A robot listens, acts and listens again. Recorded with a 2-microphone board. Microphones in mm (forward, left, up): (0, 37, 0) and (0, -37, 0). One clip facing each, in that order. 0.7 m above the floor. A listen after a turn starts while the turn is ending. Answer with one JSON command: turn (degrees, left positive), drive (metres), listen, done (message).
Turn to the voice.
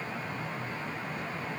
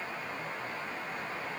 {"listen": true}
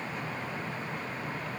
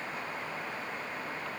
{"listen": true}
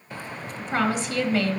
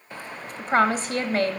{"turn": -40}
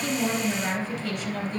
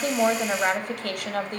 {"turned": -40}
{"turn": -90}
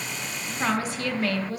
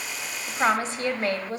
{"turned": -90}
{"turn": -35}
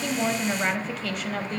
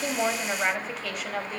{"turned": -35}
{"done": "Found it: a woman speaking, straight ahead."}